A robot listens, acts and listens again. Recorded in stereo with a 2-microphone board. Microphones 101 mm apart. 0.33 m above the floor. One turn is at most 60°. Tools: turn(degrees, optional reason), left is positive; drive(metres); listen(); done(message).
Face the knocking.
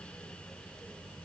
listen()
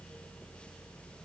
listen()
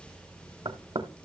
turn(degrees=-60, reason="The knocking: about 60° right or 120° right.")
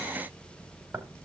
turn(degrees=-20, reason="So it is at 20° right.")
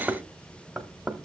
done("Found it: knocking, straight ahead, 1 to 2 m away.")